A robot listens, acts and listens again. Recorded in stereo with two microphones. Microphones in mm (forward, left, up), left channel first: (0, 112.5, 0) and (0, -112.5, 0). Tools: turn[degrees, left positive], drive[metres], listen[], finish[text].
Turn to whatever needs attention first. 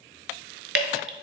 Action: listen[]
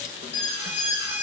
Action: turn[-30]
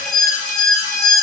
Thought: So it is at 20° left.
Action: turn[20]
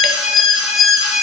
Action: finish[Facing the alarm, 2 to 4 m away.]